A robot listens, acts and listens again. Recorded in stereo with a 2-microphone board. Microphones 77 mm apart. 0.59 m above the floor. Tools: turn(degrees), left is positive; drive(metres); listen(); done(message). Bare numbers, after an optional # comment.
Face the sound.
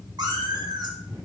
# The cat meowing: about 65° right or 115° right.
turn(-65)
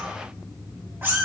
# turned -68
# So it is at 25° right.
turn(-25)
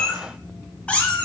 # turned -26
# The cat meowing is now 20° left.
turn(20)
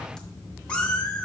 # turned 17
# The cat meowing is now 20° left.
turn(20)
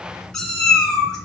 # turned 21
# The cat meowing is now 10° left.
turn(10)
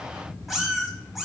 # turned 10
done("Found it: a cat meowing, straight ahead.")